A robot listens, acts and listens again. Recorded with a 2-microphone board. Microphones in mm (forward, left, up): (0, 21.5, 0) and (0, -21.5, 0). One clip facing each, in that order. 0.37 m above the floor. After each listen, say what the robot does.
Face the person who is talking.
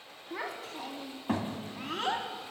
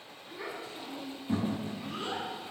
Turn 75° left.
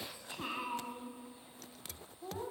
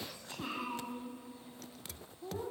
Turn 20° left.
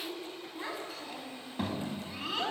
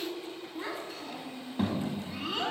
Facing the child speaking.